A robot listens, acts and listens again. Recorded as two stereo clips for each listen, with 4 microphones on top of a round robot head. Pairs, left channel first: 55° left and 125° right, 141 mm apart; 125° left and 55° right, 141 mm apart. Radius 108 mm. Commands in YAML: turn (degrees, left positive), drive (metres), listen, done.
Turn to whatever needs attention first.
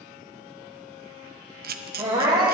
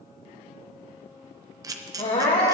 turn: 175
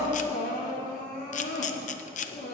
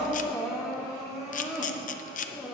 turn: 30
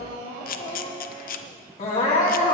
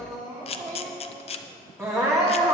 turn: 15
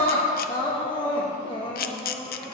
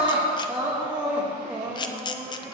done: "Found it: crying, straight ahead."